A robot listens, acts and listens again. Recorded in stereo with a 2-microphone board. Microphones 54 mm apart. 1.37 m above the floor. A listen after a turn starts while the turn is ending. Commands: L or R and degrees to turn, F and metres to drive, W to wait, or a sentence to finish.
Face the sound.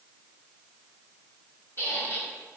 L45
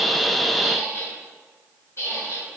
L85
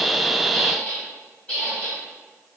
L35
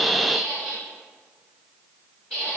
L20
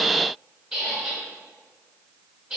Found it: a squeak, straight ahead, 1 to 2 m away.